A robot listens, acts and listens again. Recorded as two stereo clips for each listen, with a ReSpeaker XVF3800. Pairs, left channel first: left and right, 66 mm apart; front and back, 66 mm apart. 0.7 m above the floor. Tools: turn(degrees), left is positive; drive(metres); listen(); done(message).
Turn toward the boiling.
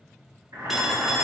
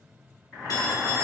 turn(degrees=-85)
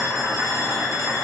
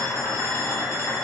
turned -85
turn(degrees=-30)
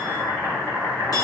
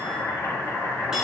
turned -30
turn(degrees=20)
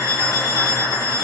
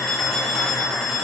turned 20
done("Found it: boiling, straight ahead.")